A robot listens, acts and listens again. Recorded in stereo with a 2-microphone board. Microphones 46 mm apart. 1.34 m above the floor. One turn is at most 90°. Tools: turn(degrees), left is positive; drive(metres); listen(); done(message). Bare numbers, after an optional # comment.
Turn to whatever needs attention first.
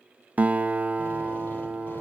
listen()
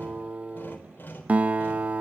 listen()
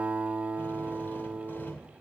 done("I can't make out anything urgent, only a drill and a guitar.")